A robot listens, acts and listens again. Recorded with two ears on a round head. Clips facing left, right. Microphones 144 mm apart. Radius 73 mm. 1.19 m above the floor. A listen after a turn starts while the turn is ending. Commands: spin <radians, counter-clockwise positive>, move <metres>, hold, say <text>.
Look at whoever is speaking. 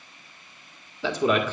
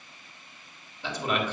spin 1.22
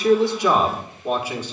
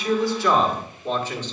spin 0.17
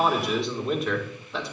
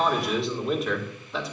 say Found it: a man speaking, straight ahead, 1 to 2 m away.